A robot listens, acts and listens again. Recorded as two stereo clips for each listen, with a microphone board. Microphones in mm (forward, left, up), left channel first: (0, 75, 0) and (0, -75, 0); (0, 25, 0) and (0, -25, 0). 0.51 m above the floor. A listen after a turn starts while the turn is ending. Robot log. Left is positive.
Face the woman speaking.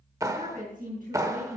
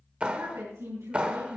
note: The woman speaking: about 70° right or 110° right.
cmd yaw -70
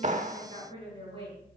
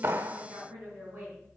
note: So it is at 35° right.
cmd yaw -35
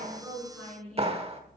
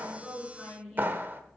end: Facing the woman speaking, over 4 m away.